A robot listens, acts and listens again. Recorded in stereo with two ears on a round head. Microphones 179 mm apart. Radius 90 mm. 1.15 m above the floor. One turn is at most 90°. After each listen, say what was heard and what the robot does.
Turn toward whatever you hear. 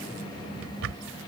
The drawer: about 65° right or 115° right. Turn 65° right.
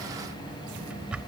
Found it: a drawer, straight ahead.